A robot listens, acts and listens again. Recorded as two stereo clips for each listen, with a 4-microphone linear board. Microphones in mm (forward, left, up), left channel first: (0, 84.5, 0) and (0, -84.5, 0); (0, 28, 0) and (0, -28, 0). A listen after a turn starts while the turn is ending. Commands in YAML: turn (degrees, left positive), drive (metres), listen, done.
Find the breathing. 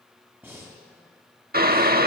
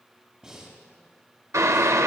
turn: -30
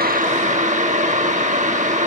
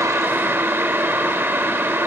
listen: true
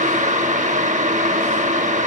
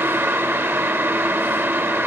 listen: true
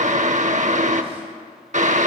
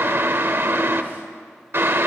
done: "I heard breathing, but can't make it out now. It was about 15° left or 135° right."